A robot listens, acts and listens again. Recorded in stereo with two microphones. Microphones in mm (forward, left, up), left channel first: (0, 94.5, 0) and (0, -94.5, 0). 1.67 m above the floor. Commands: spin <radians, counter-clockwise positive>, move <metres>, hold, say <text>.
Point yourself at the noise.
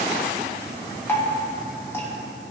spin 0.52
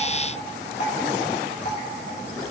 spin 2.44
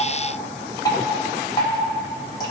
spin 0.35
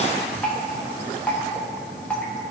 say Facing the dripping, 1 to 2 m away.